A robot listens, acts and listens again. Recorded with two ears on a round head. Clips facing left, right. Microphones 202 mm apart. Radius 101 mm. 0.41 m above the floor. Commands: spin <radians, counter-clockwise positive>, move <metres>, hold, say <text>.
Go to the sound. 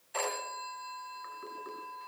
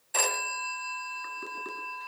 spin -1.05
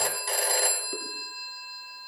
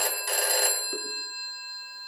move 1.0
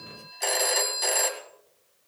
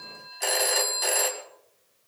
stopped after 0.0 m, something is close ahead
say Blocked. The phone ringing is further on, straight ahead.